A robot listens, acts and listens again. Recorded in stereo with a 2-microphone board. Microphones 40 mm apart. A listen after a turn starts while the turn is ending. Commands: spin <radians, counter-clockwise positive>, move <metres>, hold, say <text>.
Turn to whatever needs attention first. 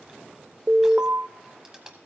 spin -0.61
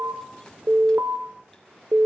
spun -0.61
spin -1.83
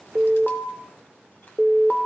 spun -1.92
say Facing the alarm.